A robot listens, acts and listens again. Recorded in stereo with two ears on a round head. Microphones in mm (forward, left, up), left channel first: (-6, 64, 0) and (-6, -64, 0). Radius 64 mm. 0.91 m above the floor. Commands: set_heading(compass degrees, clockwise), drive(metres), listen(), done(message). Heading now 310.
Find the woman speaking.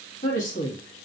set_heading(255)
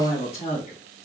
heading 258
set_heading(213)
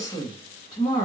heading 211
set_heading(181)
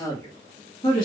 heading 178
set_heading(148)
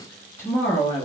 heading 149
set_heading(124)
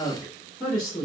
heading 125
set_heading(110)
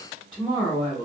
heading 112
done("Found it: a woman speaking, straight ahead, 1 to 2 m away.")